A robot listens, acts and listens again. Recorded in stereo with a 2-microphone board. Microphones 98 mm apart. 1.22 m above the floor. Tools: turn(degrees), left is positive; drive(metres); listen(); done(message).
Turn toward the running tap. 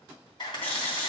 turn(degrees=20)
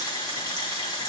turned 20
turn(degrees=145)
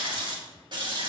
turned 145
turn(degrees=-55)
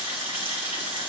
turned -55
turn(degrees=-20)
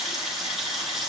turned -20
done("Found it: a running tap, straight ahead.")